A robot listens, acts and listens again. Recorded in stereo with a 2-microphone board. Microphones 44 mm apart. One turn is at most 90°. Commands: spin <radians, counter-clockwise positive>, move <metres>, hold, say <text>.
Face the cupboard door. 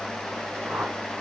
hold
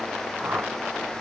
hold
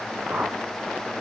say I can't make out a cupboard door to turn to.